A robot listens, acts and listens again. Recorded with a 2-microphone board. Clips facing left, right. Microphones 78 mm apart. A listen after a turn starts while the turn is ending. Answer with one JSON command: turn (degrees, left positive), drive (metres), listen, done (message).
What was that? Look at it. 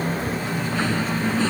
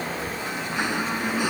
{"turn": -30}
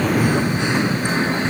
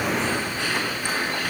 {"turn": 25}
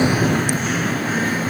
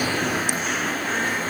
{"done": "Found it: singing, straight ahead."}